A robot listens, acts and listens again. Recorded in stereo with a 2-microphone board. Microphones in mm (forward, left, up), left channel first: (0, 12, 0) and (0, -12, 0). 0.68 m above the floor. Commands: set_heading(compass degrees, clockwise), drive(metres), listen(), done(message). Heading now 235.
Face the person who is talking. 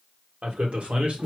set_heading(300)
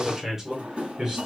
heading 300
set_heading(330)
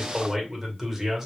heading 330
set_heading(350)
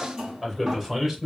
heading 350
set_heading(0)
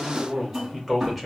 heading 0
done("Found it: a man speaking, straight ahead, 2 to 4 m away.")